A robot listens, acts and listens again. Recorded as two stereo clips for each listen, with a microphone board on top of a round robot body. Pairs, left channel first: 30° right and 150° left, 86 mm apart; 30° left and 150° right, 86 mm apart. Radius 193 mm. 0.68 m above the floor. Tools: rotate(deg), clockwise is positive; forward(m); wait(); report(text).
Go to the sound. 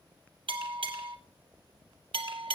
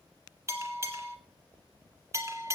rotate(-155)
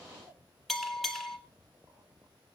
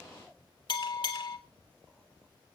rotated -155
rotate(-55)
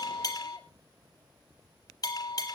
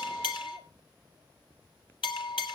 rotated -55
rotate(-10)
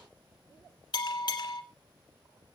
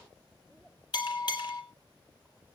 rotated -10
forward(1.0)
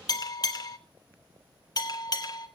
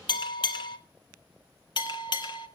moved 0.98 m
forward(1.0)
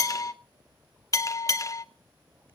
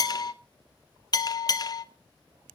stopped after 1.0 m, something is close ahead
report("I am next to the bell.")